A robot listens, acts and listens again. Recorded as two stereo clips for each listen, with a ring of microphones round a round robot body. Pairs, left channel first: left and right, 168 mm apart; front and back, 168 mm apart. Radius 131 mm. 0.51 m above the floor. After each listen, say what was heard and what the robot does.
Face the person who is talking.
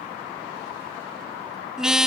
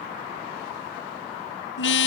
Keep listening.
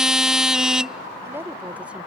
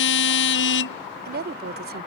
The woman speaking: 175° right. Turn 175° right.
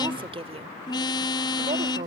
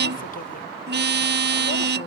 The woman speaking is now 50° right. Turn 50° right.
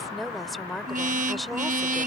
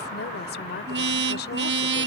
Facing the woman speaking.